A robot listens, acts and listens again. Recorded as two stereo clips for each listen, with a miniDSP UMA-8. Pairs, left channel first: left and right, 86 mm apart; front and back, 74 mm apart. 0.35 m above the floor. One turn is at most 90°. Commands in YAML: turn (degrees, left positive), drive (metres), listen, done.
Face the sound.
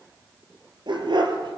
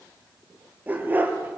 turn: -90
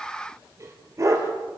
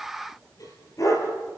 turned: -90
turn: -40
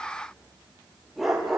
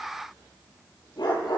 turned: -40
done: "Found it: a dog barking, straight ahead, over 4 m away."